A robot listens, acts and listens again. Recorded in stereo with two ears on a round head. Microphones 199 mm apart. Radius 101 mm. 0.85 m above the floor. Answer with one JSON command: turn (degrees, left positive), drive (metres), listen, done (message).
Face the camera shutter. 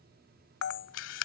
{"turn": 60}
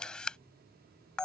{"done": "Found it: a camera shutter, straight ahead."}